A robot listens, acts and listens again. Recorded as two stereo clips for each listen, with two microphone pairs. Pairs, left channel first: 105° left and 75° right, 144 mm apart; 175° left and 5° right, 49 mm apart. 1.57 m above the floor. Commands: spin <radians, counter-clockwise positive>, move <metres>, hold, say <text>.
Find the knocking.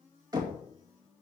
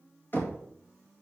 spin -2.44
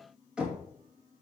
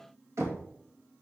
say Found it: knocking, straight ahead, 2 to 4 m away.